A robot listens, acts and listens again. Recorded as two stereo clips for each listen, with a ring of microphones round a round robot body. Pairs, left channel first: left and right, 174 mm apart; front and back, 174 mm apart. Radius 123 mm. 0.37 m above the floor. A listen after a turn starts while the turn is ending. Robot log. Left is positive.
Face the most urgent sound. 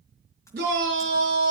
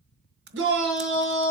note: The shout: 145° right.
cmd yaw -145
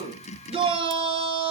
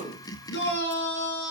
note: The shout is now 35° right.
cmd yaw -35
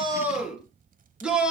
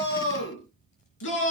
end: Found it: a shout, straight ahead.